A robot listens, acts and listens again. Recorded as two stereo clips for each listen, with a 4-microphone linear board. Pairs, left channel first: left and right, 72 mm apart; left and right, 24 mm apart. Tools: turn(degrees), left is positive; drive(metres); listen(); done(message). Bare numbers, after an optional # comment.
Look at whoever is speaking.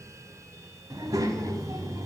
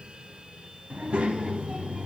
# The child speaking: about 55° right or 125° right.
turn(-55)
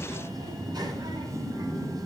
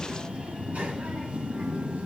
# So it is at 75° right.
turn(-75)
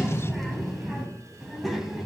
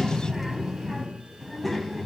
done("Found it: a child speaking, straight ahead, 2 to 4 m away.")